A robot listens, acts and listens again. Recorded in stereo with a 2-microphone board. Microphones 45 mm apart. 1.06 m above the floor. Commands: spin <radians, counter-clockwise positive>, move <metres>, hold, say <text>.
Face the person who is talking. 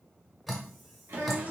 spin -1.57
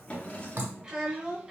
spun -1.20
spin -0.35
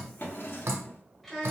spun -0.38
say Facing the child speaking.